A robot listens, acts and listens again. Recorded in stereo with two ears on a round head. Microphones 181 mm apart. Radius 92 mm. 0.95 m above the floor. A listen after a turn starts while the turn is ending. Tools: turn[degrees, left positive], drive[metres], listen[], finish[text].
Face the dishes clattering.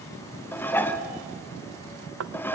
Action: turn[30]
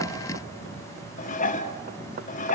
Thought: So it is at 140° left.
Action: turn[140]
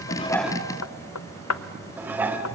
Thought: The dishes clattering is now 10° right.
Action: turn[-10]
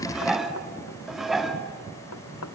Action: finish[Found it: dishes clattering, straight ahead, 1 to 2 m away.]